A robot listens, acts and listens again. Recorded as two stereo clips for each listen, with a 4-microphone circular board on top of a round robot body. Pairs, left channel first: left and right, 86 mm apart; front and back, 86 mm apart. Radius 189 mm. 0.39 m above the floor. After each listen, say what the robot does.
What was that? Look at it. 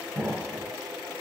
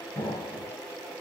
Facing the explosion.